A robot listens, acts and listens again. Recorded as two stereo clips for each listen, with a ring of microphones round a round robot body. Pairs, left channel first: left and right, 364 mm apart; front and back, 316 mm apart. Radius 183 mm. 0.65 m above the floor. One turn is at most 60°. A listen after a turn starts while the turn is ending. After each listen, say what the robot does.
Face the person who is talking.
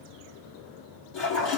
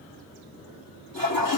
Keep listening.
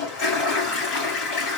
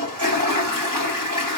Keep listening.
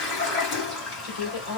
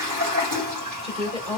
Turn 60° left.
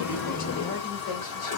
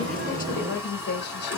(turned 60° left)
Turn 55° left.
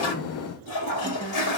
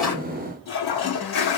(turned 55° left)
Keep listening.
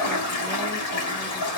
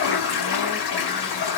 Keep listening.
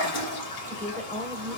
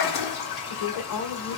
Facing the woman speaking, 1 to 2 m away.